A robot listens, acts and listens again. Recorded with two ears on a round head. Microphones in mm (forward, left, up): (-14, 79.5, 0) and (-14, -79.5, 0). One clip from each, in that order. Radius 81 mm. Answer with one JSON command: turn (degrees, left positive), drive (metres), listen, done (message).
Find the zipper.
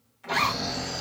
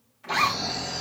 {"turn": 30}
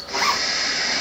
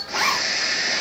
{"turn": -15}
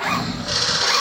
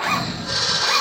{"done": "Found it: a zipper, straight ahead, under 1 m away."}